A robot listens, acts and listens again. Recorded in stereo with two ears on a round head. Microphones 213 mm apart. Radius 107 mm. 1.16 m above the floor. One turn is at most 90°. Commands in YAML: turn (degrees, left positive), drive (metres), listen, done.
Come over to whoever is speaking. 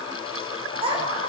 turn: -25
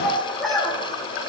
drive: 1.0
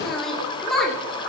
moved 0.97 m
drive: 1.0
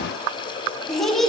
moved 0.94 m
drive: 1.0
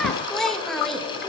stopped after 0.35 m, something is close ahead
done: "I am next to the child speaking."